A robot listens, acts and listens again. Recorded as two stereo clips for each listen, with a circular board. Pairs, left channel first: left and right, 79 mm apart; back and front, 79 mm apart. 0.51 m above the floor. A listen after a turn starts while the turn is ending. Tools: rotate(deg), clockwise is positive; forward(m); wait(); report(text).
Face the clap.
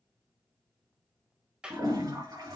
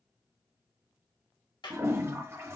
rotate(170)
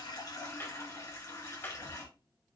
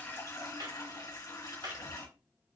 rotate(-25)
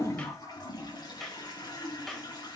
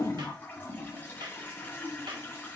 report("Found it: a clap, straight ahead.")